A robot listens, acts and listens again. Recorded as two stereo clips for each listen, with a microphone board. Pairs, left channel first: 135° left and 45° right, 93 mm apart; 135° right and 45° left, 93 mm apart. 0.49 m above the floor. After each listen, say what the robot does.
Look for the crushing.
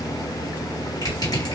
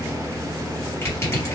Turn 170° left.
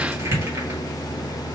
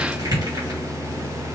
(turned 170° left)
Turn 10° left.
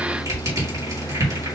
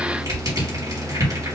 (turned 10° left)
Facing the crushing, 2 to 4 m away.